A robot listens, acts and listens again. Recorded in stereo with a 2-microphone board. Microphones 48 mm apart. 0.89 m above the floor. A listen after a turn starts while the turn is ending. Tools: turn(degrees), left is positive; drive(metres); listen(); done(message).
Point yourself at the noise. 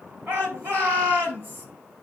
turn(degrees=-45)
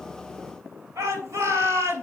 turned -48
turn(degrees=-85)
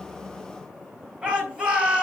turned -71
turn(degrees=-15)
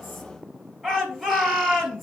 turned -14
done("Facing the shout.")